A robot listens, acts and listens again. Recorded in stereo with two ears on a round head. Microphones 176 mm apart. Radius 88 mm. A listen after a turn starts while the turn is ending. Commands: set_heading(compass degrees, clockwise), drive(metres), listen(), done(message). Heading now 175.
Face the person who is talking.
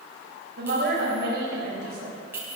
set_heading(235)
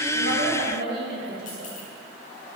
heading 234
set_heading(294)
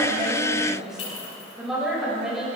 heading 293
done("Found it: a woman speaking, straight ahead.")